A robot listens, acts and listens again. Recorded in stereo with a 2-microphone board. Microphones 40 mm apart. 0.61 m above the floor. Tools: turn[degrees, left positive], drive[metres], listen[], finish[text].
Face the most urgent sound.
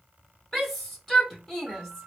Action: turn[30]
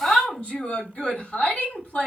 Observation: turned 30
Thought: So it is at 140° left.
Action: turn[140]
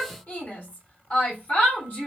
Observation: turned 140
Thought: The shout is now 50° left.
Action: turn[50]
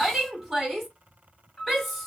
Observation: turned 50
Action: finish[Found it: a shout, straight ahead, 1 to 2 m away.]